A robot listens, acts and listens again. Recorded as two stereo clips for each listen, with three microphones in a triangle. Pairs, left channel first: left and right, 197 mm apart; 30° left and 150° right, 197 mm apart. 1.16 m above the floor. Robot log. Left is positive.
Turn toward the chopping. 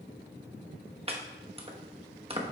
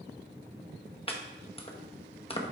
note: The chopping: 35° right.
cmd yaw -35
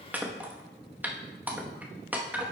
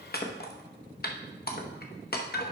note: The chopping is now 10° right.
cmd yaw -10
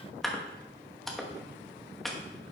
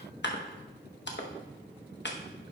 end: Found it: chopping, straight ahead.